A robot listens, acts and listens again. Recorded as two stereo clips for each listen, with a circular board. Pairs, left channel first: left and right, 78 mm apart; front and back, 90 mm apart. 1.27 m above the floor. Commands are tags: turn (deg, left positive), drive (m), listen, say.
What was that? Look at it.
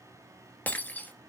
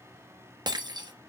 <turn deg="155"/>
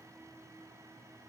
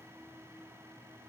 <say>Facing where the breaking glass came from. I can't hear it now.</say>